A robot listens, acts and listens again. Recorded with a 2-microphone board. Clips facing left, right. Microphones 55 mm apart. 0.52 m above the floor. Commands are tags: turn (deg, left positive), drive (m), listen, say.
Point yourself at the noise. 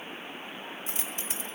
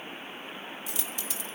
<turn deg="35"/>
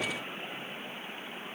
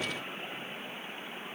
<listen/>
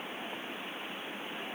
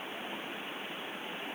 <say>I heard a dropped coin, but can't make it out now. It was about straight ahead or 110° left.</say>